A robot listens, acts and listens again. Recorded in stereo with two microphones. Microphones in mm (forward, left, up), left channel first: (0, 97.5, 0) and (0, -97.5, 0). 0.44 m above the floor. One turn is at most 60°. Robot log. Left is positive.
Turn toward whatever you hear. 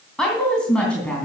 cmd yaw +30
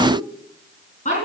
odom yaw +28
note: So it is at 140° left.
cmd yaw +60
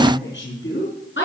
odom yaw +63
note: The woman speaking is now 70° left.
cmd yaw +60
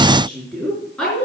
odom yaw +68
end: Facing the woman speaking.